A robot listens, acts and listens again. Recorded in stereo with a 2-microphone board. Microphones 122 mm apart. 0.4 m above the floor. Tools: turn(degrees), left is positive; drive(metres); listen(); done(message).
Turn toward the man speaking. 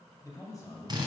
turn(degrees=30)
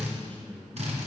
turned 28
turn(degrees=15)
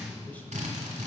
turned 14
turn(degrees=15)
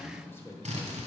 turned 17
turn(degrees=25)
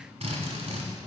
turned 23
listen()
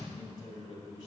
turn(degrees=45)
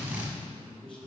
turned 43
turn(degrees=10)
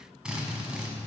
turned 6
listen()
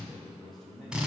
done("Found it: a man speaking, straight ahead, 1 to 2 m away.")